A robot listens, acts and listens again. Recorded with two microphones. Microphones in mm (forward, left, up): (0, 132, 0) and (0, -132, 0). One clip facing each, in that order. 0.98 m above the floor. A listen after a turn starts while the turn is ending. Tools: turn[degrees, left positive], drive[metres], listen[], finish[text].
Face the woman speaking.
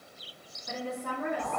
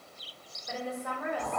Thought: The woman speaking: about 65° left or 115° left.
Action: turn[65]
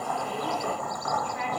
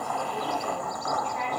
Action: listen[]
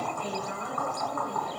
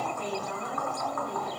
Thought: So it is at 10° left.
Action: turn[10]
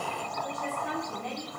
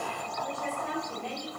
Action: finish[Found it: a woman speaking, straight ahead.]